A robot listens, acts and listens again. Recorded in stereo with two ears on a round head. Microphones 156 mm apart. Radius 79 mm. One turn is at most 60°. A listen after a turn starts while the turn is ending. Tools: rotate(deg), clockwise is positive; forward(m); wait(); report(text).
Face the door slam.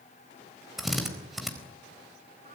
wait()
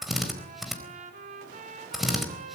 wait()
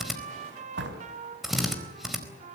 rotate(60)
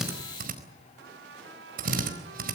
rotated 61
wait()
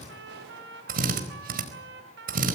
report("I heard a door slam, but can't make it out now. It was about 10° right or 45° right.")